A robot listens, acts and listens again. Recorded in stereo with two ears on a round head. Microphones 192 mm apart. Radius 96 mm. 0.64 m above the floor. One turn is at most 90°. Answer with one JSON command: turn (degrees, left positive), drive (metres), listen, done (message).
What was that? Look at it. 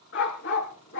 {"turn": 55}
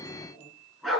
{"done": "Found it: a dog barking, straight ahead."}